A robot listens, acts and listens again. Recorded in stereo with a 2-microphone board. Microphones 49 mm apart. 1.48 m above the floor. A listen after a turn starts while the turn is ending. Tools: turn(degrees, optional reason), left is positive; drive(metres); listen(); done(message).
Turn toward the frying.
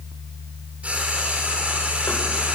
turn(degrees=-25, reason="The frying: about 25° right or 155° right.")
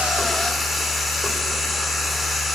done("Facing the frying.")